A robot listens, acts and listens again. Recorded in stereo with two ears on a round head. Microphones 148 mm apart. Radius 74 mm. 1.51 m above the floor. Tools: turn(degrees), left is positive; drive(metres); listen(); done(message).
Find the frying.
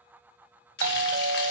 turn(degrees=75)
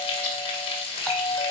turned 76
turn(degrees=30)
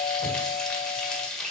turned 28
done("Facing the frying.")